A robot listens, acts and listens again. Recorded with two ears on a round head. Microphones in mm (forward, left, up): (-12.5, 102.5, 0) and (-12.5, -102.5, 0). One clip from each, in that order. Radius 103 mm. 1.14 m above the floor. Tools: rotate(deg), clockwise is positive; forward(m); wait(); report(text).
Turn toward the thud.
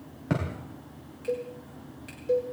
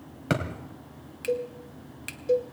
rotate(65)
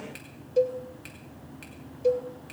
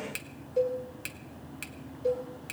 wait()
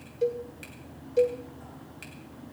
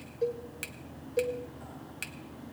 report("I heard a thud, but can't make it out now. It was about straight ahead or 50° right.")